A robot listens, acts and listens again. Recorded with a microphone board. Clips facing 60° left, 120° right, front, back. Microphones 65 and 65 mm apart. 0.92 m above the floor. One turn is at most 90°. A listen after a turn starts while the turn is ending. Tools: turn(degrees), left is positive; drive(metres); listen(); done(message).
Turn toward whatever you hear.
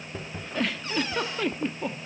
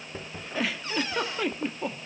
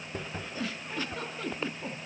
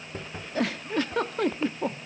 turn(degrees=90)
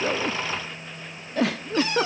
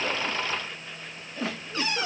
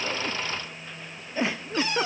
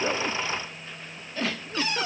turn(degrees=70)
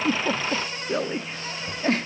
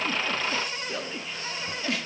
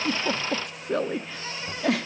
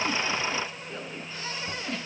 turn(degrees=10)
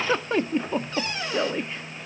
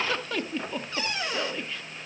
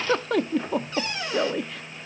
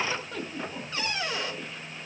done("Found it: a giggle, straight ahead.")